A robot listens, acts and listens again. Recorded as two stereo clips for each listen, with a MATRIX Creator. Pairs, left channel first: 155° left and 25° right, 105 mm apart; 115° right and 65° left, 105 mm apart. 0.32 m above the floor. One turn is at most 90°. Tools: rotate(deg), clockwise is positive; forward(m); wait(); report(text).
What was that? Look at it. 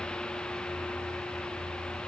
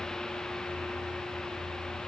wait()
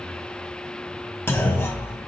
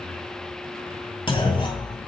rotate(90)
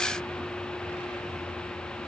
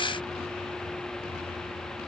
rotate(50)
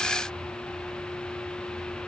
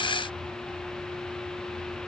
report("Facing where the clunk came from. I can't hear it now.")